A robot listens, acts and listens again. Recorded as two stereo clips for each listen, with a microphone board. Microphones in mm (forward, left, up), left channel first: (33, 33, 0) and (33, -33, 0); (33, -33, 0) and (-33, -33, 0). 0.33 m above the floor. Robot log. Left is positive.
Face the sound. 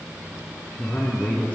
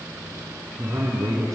note: The man speaking: 150° left.
cmd yaw +150
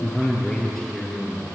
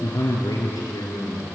end: Found it: a man speaking, straight ahead, over 4 m away.